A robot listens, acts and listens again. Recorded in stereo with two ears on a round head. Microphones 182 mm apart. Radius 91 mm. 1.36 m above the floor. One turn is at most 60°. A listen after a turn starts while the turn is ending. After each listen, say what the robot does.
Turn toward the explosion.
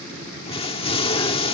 Turn 25° left.
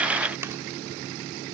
Keep listening.
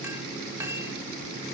I heard an explosion, but can't make it out now. It was about straight ahead or 130° left.